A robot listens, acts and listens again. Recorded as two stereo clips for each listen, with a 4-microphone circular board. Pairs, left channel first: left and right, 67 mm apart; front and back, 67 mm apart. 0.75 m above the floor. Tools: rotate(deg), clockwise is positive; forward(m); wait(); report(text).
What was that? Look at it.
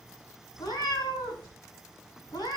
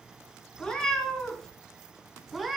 rotate(-95)
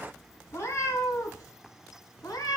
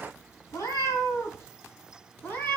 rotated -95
rotate(-65)
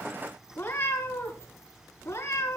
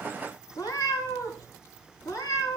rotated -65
rotate(-30)
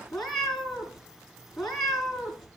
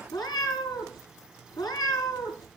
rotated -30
report("Facing the cat meowing.")